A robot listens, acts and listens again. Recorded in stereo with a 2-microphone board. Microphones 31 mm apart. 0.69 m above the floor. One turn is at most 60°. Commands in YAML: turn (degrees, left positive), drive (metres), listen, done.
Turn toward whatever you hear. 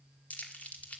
turn: 55
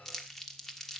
turn: 15
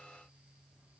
listen: true
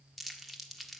done: "Found it: crumpling, straight ahead."